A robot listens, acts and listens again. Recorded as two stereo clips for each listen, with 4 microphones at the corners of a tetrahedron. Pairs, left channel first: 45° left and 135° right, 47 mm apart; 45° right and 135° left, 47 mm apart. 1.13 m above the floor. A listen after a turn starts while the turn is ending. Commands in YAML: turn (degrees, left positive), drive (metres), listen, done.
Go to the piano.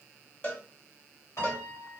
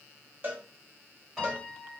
turn: 55
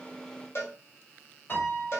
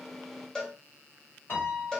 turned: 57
drive: 1.0
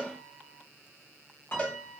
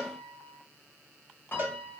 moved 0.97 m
drive: 1.0
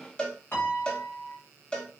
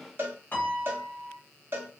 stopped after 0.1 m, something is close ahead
done: "I am next to the piano."